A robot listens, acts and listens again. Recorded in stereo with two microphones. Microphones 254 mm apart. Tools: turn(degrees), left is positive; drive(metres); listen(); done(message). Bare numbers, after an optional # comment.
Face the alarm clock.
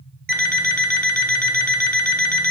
# The alarm clock: about 35° right or 145° right.
turn(-35)
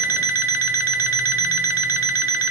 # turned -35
# So it is at 105° right.
turn(-105)
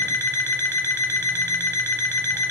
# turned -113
# The alarm clock is now 10° left.
turn(10)
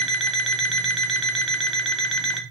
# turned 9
done("Found it: an alarm clock, straight ahead, under 1 m away.")